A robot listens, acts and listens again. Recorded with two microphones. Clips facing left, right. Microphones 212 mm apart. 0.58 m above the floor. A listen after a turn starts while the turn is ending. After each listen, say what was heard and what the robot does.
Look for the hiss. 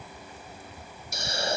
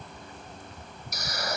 The hiss: about 25° left or 155° left. Turn 25° left.
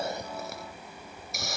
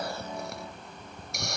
Facing the hiss.